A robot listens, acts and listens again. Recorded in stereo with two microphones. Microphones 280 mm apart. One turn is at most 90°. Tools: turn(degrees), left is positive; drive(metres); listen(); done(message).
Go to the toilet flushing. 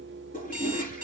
turn(degrees=30)
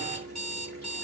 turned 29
listen()
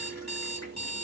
listen()
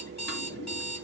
done("I heard a toilet flushing, but can't make it out now. It was about straight ahead or 120° left. I did not reach it.")